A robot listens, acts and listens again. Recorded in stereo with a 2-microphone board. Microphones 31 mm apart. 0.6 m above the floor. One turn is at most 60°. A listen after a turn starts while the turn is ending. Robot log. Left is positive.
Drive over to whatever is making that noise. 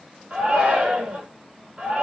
note: The shout: about 50° right or 130° right.
cmd yaw -50
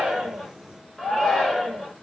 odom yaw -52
cmd fwd 1.0
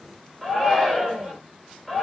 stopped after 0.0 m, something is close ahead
end: Something is in my way. I am facing the shout but have not reached it.